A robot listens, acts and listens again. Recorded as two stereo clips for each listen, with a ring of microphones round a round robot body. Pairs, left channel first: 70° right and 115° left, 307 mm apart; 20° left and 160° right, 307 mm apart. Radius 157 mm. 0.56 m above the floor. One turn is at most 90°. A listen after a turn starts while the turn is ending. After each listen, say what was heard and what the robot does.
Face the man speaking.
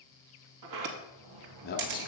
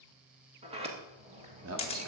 The man speaking: 125° right. Turn 90° right.
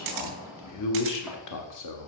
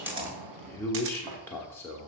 The man speaking is now 60° right. Turn 60° right.
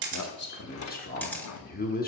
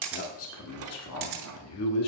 The man speaking is now 10° right. Turn 10° right.
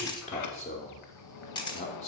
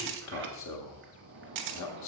Facing the man speaking.